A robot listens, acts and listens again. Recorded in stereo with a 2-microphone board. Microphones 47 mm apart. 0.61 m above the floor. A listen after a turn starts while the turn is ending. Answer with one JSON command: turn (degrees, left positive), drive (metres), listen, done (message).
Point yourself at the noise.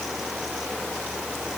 {"listen": true}
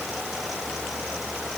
{"listen": true}
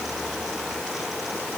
{"done": "I can't make out anything."}